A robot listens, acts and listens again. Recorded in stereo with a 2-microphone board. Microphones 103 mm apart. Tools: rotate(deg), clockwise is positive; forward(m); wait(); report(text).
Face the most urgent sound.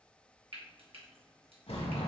wait()
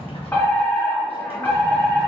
rotate(-20)
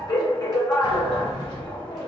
rotate(-140)
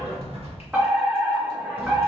rotate(10)
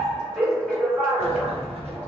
report("Facing the fire alarm.")